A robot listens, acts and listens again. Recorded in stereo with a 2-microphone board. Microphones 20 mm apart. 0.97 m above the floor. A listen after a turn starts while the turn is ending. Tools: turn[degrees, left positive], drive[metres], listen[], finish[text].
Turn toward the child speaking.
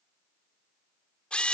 Action: listen[]
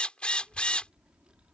Thought: The child speaking: about 65° right or 115° right.
Action: turn[-65]
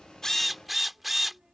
Thought: So it is at 25° right.
Action: turn[-25]
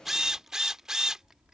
Thought: The child speaking is now 30° right.
Action: turn[-30]
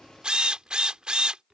Thought: The child speaking is now 25° right.
Action: turn[-25]
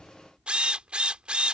Thought: The child speaking is now 10° right.
Action: turn[-10]
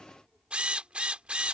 Action: finish[Facing the child speaking.]